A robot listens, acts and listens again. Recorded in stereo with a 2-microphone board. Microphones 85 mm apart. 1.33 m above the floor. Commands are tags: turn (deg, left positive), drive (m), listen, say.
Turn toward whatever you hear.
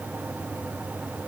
<listen/>
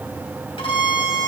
<turn deg="90"/>
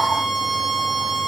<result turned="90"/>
<say>Facing the violin, 2 to 4 m away.</say>